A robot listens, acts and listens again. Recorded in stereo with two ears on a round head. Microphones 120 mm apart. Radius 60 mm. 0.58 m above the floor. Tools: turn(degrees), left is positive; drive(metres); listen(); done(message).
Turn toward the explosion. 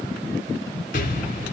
turn(degrees=70)
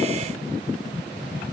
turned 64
listen()
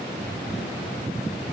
done("I heard an explosion, but can't make it out now. It was about 5° left or 50° left.")